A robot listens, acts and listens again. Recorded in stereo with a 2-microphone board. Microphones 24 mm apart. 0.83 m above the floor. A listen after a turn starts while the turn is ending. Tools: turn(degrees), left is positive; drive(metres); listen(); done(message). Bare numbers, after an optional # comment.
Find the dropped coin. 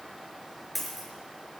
turn(-30)
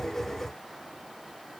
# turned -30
listen()
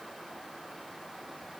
done("I heard a dropped coin, but can't make it out now. It was about 25° left or 145° right.")